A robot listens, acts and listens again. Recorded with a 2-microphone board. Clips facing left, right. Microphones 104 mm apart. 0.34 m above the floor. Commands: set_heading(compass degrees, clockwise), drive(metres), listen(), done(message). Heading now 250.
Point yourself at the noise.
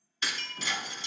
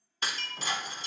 set_heading(295)
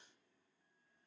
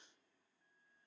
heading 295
listen()
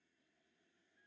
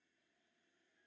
done("I heard breaking glass, but can't make it out now. It was about straight ahead or 90° right.")